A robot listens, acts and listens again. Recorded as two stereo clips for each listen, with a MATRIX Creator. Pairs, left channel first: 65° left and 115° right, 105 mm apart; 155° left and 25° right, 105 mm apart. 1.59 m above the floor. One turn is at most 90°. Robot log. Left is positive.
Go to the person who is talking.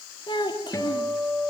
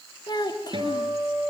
note: The child speaking: 110° left.
cmd yaw +90
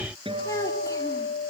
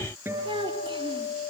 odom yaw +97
note: The child speaking is now 10° left.
cmd yaw +10
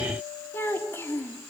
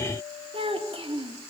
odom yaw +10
cmd fwd 1.0
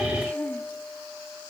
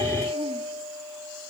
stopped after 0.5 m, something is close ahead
cmd idle
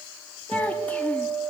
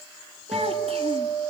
note: The child speaking is now 10° right.
cmd yaw -10
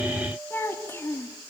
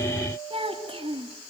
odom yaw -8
end: Blocked. The child speaking is further on, straight ahead.